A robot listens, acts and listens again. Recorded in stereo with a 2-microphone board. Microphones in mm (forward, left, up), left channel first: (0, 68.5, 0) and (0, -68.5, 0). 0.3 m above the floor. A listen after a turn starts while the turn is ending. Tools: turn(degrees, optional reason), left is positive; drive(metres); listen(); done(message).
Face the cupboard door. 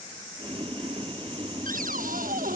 turn(degrees=-90)
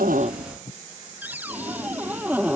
turn(degrees=-10, reason="So it is at 10° right.")
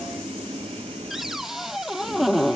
done("Facing the cupboard door.")